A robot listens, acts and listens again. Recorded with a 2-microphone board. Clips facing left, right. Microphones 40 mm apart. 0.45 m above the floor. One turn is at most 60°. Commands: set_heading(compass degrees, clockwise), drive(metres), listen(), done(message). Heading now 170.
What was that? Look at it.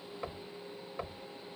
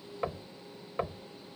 set_heading(195)
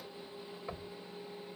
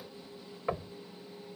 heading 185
set_heading(245)
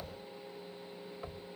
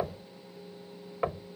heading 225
set_heading(285)
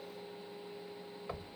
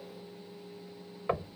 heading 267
set_heading(322)
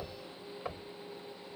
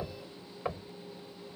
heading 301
set_heading(321)
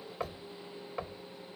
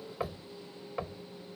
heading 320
done("Found it: knocking, straight ahead.")